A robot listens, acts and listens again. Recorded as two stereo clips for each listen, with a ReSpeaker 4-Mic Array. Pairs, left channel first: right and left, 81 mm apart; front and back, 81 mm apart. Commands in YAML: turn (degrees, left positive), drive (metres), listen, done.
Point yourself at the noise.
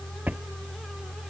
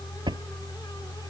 turn: 160
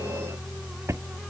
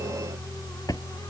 turn: 35
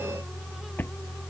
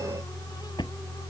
turn: -25
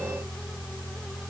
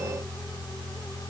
listen: true
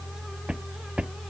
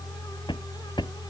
turn: 10
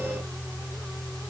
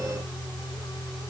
listen: true
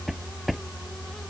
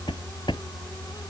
done: "Facing the drawer."